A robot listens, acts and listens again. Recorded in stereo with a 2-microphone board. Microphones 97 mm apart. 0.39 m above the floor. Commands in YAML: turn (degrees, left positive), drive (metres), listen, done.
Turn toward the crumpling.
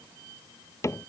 listen: true
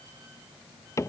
listen: true
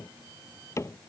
done: "I can't make out crumpling, only a cupboard door."